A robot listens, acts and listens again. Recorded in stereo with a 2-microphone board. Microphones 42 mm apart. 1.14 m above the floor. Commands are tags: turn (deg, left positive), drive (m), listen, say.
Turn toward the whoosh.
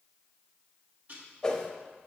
<turn deg="15"/>
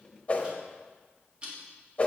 <turn deg="150"/>
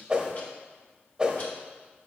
<turn deg="-20"/>
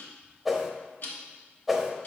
<say>Found it: a whoosh, straight ahead, under 1 m away.</say>